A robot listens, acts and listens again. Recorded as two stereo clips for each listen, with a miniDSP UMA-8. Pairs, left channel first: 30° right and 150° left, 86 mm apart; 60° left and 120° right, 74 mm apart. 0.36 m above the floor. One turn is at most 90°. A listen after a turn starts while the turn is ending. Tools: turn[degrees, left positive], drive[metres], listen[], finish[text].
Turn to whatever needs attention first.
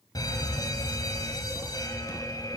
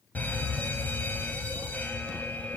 Action: finish[Found it: a fire alarm, straight ahead.]